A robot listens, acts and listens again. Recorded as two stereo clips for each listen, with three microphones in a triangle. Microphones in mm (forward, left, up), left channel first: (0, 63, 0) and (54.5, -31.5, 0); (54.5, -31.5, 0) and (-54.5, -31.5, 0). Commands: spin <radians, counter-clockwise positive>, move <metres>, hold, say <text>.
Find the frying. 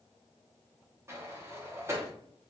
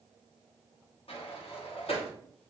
hold
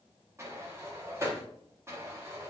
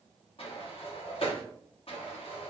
hold
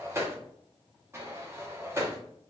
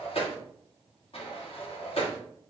say I can't make out frying to turn to.